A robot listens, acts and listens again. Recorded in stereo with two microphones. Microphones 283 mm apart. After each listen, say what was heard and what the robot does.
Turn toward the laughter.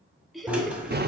Turn 30° left.
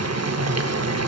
Keep listening.
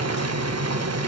Keep listening.
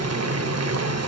I heard laughter, but can't make it out now. It was about 30° right or 150° left.